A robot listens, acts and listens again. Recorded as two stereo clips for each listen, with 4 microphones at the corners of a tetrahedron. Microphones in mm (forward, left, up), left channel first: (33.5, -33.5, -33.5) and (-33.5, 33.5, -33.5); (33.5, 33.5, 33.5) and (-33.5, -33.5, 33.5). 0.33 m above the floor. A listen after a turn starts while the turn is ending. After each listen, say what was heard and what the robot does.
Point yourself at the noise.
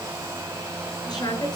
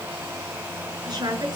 The woman speaking: 90° right. Turn 90° right.
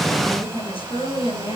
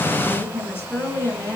The woman speaking is now 20° right. Turn 20° right.
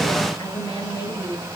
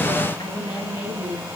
Found it: a woman speaking, straight ahead, over 4 m away.